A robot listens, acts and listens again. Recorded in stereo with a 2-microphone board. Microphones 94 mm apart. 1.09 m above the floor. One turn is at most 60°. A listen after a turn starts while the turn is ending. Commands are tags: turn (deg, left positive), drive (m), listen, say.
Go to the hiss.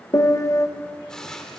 <turn deg="30"/>
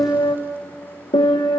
<listen/>
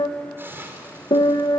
<turn deg="-20"/>
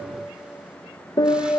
<listen/>
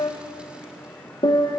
<listen/>
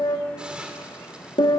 <turn deg="-10"/>
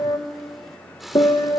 <drive m="1.0"/>
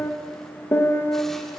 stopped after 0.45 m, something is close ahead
<listen/>
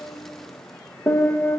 <listen/>
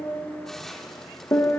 <say>Something is in my way. I am facing the hiss but have not reached it.</say>